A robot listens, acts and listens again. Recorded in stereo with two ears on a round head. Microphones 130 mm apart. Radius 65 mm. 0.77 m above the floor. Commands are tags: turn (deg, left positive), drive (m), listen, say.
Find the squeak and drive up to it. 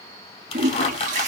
<turn deg="45"/>
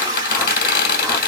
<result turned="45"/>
<turn deg="85"/>
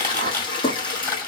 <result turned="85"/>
<turn deg="15"/>
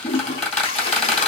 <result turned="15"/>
<drive m="1.0"/>
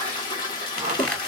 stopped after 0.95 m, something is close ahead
<say>Arrived at the squeak, straight ahead.</say>